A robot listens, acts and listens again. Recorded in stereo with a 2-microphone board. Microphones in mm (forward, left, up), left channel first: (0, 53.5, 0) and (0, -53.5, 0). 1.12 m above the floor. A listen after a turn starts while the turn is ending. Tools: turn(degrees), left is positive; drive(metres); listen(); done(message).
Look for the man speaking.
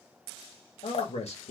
turn(degrees=90)
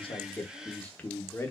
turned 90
turn(degrees=25)
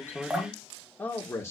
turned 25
turn(degrees=25)
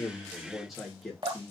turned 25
done("Facing the man speaking.")